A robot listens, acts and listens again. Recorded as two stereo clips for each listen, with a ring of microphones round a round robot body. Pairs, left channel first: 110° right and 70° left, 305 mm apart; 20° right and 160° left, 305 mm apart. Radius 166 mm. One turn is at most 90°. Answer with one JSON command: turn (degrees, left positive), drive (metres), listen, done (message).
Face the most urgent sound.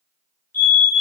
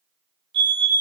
{"turn": -90}
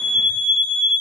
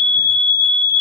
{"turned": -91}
{"turn": -90}
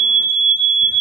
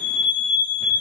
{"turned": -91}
{"done": "Facing the fire alarm, over 4 m away."}